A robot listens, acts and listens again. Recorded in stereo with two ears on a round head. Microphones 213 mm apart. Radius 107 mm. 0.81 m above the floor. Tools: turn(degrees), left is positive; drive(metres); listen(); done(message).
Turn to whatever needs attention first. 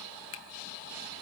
listen()
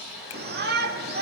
turn(degrees=-40)
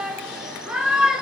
done("Found it: a shout, straight ahead, 1 to 2 m away.")